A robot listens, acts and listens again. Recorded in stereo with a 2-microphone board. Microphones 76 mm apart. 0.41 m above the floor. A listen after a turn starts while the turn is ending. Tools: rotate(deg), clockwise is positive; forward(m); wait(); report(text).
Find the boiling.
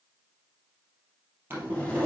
rotate(30)
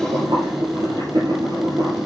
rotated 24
rotate(130)
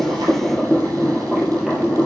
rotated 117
rotate(10)
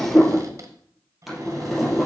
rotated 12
report("Facing the boiling, 2 to 4 m away.")